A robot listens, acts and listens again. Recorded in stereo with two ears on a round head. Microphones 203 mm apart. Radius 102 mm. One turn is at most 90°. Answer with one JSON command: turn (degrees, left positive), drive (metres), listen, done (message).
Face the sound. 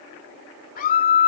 {"turn": 40}
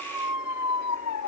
{"turn": 90}
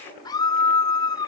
{"turn": 20}
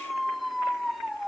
{"done": "Facing the scream."}